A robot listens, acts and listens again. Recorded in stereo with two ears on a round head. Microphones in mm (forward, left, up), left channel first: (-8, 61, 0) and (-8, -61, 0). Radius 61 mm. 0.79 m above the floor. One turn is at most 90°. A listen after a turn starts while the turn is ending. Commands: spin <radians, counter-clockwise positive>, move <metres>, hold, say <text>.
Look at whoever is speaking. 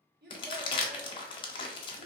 spin -1.31
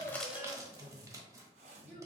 hold
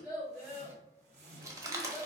say Facing the child speaking, 1 to 2 m away.